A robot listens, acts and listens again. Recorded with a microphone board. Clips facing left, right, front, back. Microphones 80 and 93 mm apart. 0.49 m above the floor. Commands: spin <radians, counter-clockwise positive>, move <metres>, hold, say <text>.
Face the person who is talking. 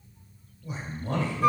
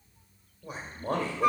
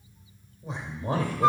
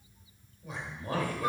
spin -1.05
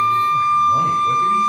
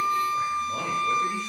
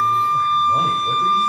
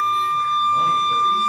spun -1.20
spin 0.17
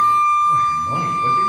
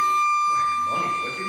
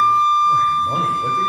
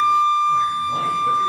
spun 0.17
hold
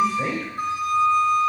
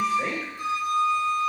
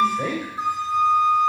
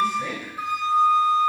say Facing the man speaking, 2 to 4 m away.